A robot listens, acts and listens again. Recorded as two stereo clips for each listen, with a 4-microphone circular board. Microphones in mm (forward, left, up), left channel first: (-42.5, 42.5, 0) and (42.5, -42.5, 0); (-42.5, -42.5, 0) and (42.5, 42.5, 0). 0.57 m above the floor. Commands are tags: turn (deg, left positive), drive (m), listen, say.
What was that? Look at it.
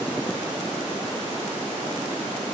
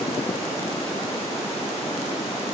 <listen/>
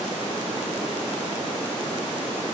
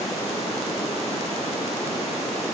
<listen/>
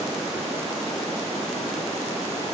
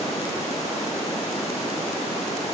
<say>I can't make out anything to turn to.</say>